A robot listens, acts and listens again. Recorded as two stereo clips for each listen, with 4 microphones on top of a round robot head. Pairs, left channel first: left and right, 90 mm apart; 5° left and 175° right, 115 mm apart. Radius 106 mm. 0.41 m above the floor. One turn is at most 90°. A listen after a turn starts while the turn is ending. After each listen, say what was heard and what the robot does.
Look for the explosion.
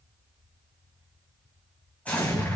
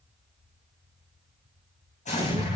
The explosion: 15° left. Turn 15° left.
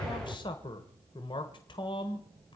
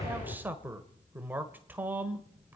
Found it: an explosion, straight ahead, over 4 m away.